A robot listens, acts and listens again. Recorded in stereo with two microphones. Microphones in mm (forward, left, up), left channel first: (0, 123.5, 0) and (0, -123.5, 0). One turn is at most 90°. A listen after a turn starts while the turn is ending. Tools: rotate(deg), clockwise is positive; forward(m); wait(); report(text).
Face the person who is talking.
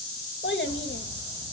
rotate(-50)
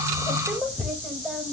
report("Facing the child speaking.")